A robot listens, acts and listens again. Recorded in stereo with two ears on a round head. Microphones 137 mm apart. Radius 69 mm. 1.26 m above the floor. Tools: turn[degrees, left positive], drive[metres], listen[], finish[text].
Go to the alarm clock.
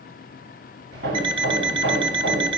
Thought: The alarm clock: about 35° right or 145° right.
Action: turn[-35]
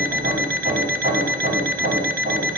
Thought: So it is at 110° right.
Action: turn[-110]
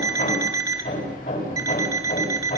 Thought: The alarm clock is now 25° right.
Action: turn[-25]
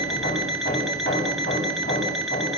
Action: drive[1.0]
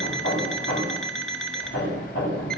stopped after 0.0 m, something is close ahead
Action: finish[Something is in my way. I am facing the alarm clock but have not reached it.]